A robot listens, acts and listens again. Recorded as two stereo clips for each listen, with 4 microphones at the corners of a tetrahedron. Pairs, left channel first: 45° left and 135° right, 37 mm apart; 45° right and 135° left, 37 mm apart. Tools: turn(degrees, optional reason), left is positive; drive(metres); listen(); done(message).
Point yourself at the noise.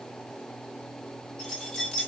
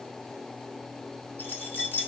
turn(degrees=-25, reason="The keys jangling: 25° right.")
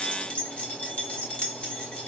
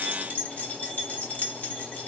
done("Facing the keys jangling.")